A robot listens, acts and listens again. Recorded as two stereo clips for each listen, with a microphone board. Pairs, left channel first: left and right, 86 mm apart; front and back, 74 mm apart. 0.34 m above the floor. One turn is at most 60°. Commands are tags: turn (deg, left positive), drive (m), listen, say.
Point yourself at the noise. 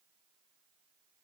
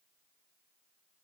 <listen/>
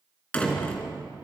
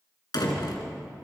<turn deg="15"/>
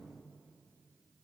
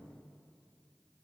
<say>Facing where the door slam came from. I can't hear it now.</say>